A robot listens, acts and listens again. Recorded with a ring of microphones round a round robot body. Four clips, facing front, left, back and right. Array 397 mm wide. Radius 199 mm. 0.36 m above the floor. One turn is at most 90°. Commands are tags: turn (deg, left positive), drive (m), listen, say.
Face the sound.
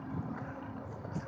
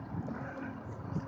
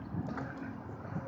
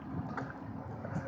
<listen/>
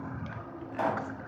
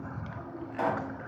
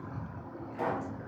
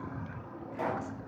<turn deg="40"/>
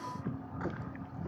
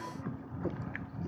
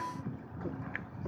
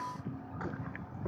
<say>I heard a pop from this way, but can't make it out now.</say>